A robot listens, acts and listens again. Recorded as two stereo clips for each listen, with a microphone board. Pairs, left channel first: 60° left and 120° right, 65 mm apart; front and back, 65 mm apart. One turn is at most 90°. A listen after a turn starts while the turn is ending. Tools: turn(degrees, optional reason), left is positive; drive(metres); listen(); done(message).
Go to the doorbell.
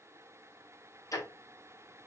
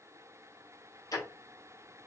listen()
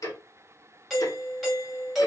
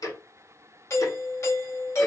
turn(degrees=-35, reason="The doorbell: 35° right.")
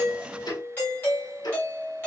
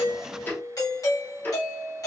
drive(metres=1.0)
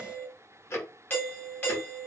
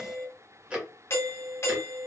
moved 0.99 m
turn(degrees=10, reason="The doorbell is now 10° left.")
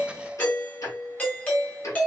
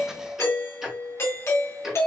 drive(metres=1.0)
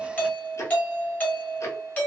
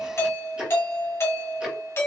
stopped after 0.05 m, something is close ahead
done("I am next to the doorbell.")